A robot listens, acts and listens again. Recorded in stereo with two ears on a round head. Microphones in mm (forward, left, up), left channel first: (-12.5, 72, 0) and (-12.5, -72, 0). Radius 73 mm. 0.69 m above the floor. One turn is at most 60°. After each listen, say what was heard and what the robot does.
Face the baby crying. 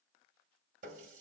Keep listening.
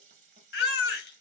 The baby crying: about 65° left or 115° left. Turn 60° left.
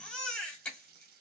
Facing the baby crying, under 1 m away.